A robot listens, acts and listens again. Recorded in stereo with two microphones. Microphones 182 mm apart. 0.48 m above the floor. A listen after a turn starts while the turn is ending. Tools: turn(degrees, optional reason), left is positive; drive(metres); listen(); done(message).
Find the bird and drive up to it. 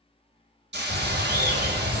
turn(degrees=-60, reason="The bird: about 60° right or 120° right.")
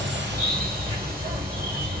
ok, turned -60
turn(degrees=-20, reason="So it is at 20° right.")
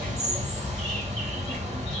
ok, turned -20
drive(metres=1.0)
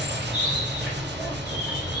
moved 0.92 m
drive(metres=1.0)
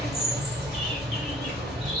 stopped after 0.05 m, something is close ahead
done("Arrived at the bird, straight ahead.")